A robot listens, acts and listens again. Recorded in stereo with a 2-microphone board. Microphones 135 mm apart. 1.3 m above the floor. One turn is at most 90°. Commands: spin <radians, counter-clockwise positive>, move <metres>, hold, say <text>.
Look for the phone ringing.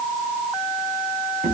hold
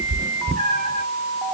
hold
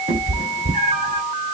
say I can't make out a phone ringing, only a cat meowing.